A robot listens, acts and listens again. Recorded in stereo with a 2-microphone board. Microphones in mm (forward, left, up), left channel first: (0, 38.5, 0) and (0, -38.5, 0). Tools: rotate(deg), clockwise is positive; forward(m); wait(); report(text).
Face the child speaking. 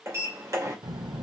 rotate(70)
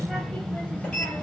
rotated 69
rotate(-25)
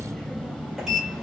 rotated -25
rotate(-25)
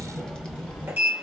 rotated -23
rotate(-15)
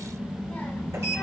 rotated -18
rotate(-15)
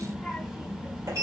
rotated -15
report("Facing the child speaking, 2 to 4 m away.")